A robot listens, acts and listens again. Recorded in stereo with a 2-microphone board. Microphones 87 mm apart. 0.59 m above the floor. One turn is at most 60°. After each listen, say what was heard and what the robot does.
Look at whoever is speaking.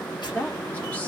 The woman speaking: about 20° left or 160° left. Turn 20° left.
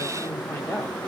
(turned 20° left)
So it is at 140° left. Turn 60° left.
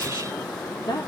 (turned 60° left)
The woman speaking is now 100° left. Turn 60° left.
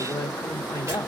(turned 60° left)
The woman speaking is now 40° left. Turn 40° left.
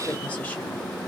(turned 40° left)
Keep listening.
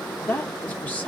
The woman speaking is now 20° left. Turn 20° left.
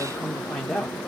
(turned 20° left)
Facing the woman speaking.